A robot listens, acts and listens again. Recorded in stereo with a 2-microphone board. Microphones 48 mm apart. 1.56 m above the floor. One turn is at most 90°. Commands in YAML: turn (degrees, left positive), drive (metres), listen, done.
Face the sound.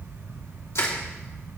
turn: 90
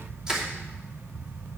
turn: -15
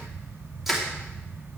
done: "Found it: crushing, straight ahead."